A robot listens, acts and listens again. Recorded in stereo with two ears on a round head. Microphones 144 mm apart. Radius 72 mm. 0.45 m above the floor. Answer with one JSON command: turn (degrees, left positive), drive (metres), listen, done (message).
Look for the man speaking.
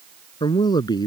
{"turn": 25}
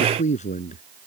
{"turn": 130}
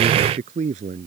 {"turn": -45}
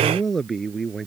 {"done": "Found it: a man speaking, straight ahead."}